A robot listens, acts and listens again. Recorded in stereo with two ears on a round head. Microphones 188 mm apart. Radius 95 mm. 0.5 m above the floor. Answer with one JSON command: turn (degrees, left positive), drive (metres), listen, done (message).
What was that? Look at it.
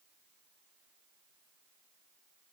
{"listen": true}
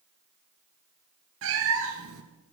{"turn": -70}
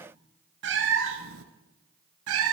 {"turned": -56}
{"turn": -75}
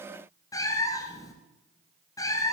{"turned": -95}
{"turn": 15}
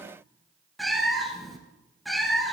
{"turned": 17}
{"done": "Facing the cat meowing."}